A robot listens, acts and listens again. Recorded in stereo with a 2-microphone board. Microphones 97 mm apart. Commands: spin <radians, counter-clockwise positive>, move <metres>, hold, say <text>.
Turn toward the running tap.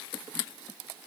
hold
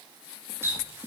spin -0.44
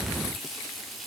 say Found it: a running tap, straight ahead, 1 to 2 m away.